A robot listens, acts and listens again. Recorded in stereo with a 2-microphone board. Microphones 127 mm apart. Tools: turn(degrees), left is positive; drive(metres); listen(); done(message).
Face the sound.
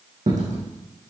turn(degrees=-90)
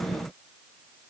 done("I heard a dropped coin from this way, but can't make it out now.")